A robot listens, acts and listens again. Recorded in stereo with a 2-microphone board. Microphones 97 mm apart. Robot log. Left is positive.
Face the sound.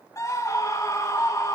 note: The scream: about 30° left or 150° left.
cmd yaw +30
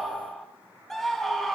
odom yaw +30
end: Facing the scream.